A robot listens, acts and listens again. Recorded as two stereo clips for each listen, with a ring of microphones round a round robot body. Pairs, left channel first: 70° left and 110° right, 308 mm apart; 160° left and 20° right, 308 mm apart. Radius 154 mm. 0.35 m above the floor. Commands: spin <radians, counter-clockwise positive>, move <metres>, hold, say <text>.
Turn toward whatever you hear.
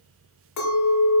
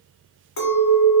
spin 1.83
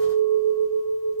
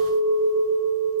spin 0.26
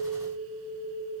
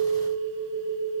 say Facing the clink, 1 to 2 m away.